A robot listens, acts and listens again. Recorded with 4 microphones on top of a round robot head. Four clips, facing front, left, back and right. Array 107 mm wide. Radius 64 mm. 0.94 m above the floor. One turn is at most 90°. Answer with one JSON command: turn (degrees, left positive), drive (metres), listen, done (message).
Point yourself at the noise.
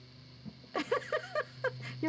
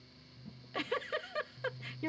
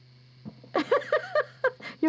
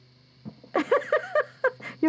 {"turn": -90}
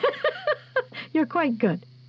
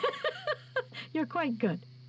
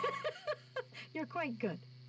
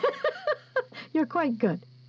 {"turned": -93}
{"turn": -30}
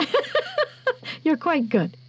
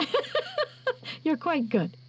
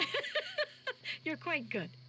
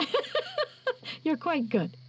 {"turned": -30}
{"done": "Facing the giggle."}